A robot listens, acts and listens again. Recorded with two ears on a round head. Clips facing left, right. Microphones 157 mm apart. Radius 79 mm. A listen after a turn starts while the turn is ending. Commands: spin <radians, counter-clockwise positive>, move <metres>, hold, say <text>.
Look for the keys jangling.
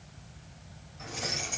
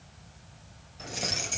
spin -0.61
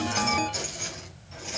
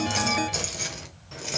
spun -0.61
spin -2.01
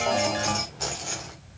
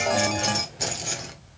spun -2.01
spin -0.35
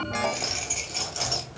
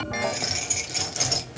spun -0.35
spin -0.35
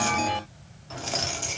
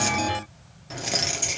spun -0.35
spin -0.26
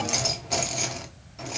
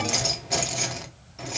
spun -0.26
say Found it: keys jangling, straight ahead, 1 to 2 m away.